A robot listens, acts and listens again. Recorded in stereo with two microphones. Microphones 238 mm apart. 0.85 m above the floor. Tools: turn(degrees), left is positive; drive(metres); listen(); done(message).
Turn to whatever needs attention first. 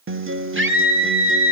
turn(degrees=-60)
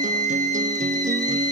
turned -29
turn(degrees=-90)
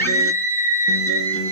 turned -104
turn(degrees=10)
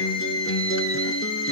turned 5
done("Facing the scream.")